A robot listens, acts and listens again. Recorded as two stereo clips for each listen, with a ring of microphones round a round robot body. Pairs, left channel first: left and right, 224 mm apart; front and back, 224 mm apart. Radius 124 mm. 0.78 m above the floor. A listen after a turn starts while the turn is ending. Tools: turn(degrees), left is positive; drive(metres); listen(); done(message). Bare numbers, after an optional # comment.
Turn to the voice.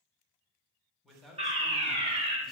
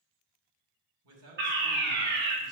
# The man speaking: straight behind.
turn(180)
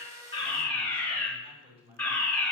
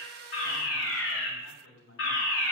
# The man speaking is now 20° right.
turn(-20)
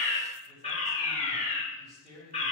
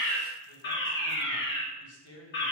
done("Found it: a man speaking, straight ahead, 2 to 4 m away.")